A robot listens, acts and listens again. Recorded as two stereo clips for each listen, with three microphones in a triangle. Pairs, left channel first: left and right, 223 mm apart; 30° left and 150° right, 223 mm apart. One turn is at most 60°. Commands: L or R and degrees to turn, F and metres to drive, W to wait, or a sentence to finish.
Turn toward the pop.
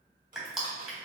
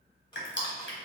W
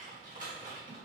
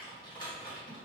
W
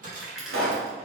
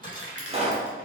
R60
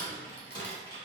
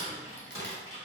R25
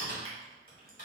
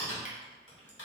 Facing where the pop came from. I can't hear it now.